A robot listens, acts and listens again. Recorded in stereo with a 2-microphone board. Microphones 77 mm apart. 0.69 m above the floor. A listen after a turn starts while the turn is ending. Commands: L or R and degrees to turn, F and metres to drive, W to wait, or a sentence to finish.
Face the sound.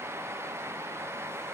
W
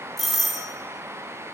L30
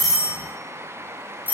R25
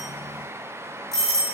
L10
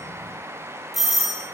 Facing the doorbell, 2 to 4 m away.